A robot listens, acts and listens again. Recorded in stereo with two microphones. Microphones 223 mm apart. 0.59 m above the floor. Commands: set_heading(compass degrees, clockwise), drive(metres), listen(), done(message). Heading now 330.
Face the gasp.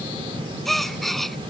set_heading(300)
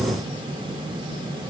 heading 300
listen()
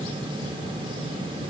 done("I heard a gasp, but can't make it out now. It was about 30° right or 150° left.")